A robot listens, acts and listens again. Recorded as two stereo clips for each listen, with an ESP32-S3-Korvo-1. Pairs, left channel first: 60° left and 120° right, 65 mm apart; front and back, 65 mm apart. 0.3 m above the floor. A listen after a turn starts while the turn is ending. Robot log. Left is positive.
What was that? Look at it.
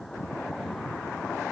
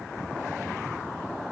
cmd idle
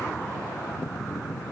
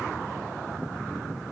cmd idle
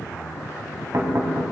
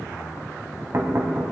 note: The knocking: 140° right.
cmd yaw -140
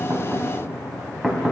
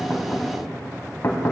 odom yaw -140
note: The knocking is now 40° right.
cmd yaw -40
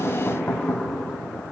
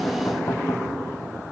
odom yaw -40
end: Facing the knocking.